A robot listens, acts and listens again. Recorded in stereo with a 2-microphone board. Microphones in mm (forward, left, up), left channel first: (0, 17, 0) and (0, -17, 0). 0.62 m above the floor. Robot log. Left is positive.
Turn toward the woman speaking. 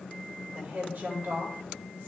note: The woman speaking: about 70° right or 110° right.
cmd yaw -70
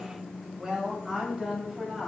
note: So it is at 10° right.
cmd yaw -10
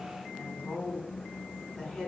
note: The woman speaking is now 10° left.
cmd yaw +10
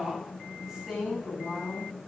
end: Found it: a woman speaking, straight ahead.